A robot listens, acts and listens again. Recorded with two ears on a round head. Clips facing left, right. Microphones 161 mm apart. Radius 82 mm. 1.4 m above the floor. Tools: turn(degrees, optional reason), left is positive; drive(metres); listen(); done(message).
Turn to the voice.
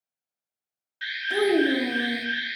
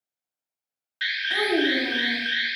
turn(degrees=25, reason="The child speaking: about 25° left or 155° left.")
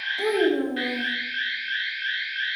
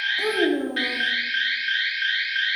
done("Facing the child speaking, 1 to 2 m away.")